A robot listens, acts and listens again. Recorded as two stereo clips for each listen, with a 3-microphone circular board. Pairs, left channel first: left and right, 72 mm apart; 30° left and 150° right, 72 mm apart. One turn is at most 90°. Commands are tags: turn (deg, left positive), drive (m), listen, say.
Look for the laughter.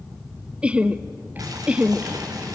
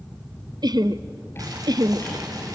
<turn deg="-90"/>
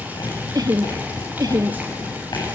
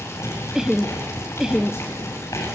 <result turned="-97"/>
<turn deg="-65"/>
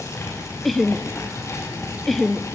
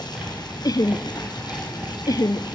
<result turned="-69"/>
<say>Found it: laughter, straight ahead, under 1 m away.</say>